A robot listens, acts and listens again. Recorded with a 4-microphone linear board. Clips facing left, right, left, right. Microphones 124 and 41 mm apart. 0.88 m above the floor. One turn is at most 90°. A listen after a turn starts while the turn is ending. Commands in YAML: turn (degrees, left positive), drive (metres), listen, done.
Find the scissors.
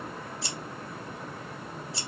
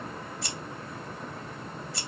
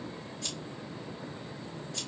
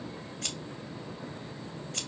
turn: -55
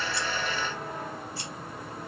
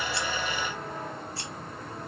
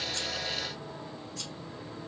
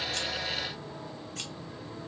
listen: true
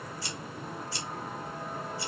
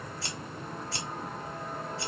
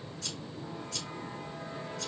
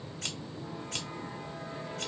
turn: -70
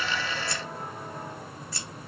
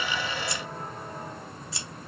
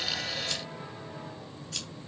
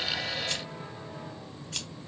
turn: -20
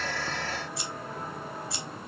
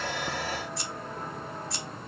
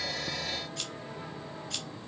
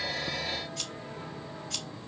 done: "Facing the scissors."